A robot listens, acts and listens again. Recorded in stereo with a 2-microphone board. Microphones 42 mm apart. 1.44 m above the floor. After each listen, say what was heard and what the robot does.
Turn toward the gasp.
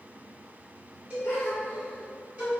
Turn 90° left.
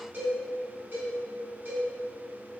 I heard a gasp from this way, but can't make it out now.